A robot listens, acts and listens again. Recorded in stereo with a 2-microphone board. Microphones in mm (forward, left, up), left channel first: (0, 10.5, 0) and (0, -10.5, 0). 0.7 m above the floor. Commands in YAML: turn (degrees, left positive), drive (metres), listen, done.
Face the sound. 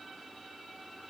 listen: true
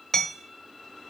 turn: 20
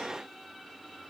listen: true
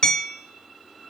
turn: 140
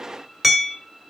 done: "Facing the hammering."